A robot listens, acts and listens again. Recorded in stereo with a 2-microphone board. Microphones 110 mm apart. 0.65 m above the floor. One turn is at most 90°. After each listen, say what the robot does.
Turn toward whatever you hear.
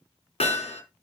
Turn 90° left.
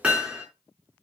Turn 10° right.
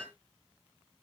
Facing the hammering, 2 to 4 m away.